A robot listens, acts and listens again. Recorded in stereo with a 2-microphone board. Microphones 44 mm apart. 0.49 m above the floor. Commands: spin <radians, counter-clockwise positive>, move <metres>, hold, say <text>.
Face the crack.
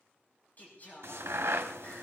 spin -1.57
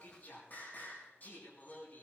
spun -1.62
say I heard a crack from this way, but can't make it out now.